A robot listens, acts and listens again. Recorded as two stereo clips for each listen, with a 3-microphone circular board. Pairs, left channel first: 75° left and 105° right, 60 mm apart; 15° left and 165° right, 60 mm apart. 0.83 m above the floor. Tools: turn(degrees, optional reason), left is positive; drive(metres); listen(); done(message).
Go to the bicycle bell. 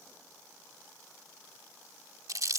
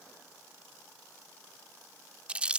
listen()
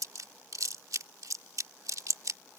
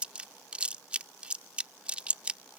listen()
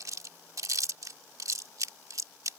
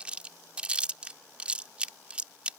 done("I can't make out a bicycle bell, only chewing.")